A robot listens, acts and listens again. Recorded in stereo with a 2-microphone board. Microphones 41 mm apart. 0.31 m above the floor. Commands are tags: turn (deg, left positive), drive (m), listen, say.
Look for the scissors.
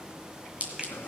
<turn deg="-35"/>
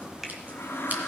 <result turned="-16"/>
<listen/>
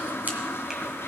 <listen/>
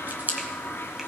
<turn deg="-130"/>
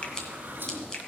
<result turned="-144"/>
<turn deg="15"/>
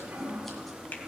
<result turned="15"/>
<listen/>
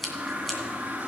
<say>Found it: scissors, straight ahead, 2 to 4 m away.</say>